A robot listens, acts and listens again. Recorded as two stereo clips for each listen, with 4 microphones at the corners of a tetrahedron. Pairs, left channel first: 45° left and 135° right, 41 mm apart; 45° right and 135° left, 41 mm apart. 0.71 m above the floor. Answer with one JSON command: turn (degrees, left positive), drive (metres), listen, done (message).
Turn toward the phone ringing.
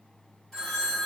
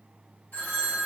{"turn": -30}
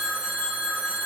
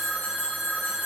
{"done": "Facing the phone ringing."}